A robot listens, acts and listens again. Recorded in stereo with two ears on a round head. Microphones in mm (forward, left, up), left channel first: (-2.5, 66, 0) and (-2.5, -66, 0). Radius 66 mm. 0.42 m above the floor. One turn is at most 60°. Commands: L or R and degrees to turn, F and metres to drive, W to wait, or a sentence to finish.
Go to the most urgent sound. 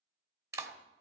W
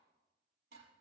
W
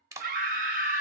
R60
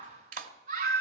R50
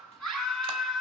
F1.0
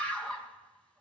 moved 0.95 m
L10
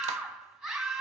F1.0
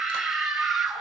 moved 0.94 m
F1.0
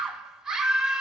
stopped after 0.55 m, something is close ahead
Arrived at the scream, straight ahead.